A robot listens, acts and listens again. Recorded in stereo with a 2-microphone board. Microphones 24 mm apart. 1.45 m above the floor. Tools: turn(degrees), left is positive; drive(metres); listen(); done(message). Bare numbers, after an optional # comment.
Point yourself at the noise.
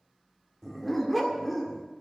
turn(-30)
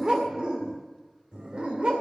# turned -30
# So it is at 125° right.
turn(-125)
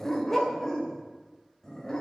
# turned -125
# The dog barking is now 20° left.
turn(20)
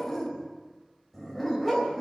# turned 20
done("Facing the dog barking, 2 to 4 m away.")